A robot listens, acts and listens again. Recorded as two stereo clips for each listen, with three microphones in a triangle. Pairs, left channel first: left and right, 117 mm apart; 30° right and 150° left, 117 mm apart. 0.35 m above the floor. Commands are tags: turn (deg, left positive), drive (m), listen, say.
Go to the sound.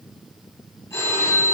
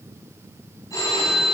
<turn deg="25"/>
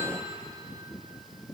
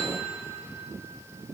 <listen/>
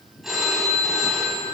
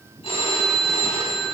<drive m="1.0"/>
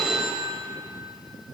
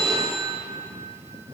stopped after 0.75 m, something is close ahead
<say>I am next to the phone ringing.</say>